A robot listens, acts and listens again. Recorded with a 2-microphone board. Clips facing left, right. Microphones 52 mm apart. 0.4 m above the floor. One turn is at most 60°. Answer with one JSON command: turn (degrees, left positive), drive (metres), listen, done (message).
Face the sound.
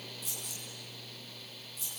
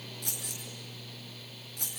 {"turn": -60}
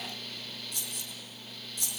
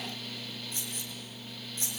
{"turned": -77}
{"turn": -35}
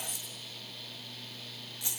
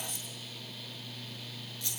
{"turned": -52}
{"turn": 20}
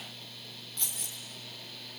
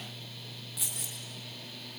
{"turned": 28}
{"done": "Found it: keys jangling, straight ahead."}